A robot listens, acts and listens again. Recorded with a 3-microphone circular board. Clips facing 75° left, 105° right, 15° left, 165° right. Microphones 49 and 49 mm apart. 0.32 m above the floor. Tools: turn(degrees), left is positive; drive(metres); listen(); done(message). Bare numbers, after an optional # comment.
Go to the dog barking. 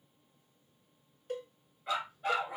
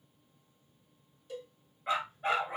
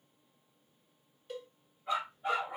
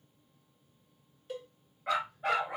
# The dog barking: 165° right.
turn(-165)
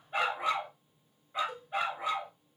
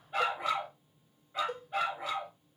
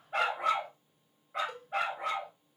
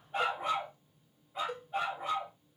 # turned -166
drive(1.0)
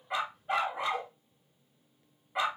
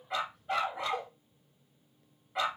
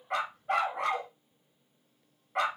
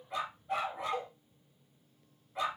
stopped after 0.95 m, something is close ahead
done("Arrived at the dog barking, straight ahead.")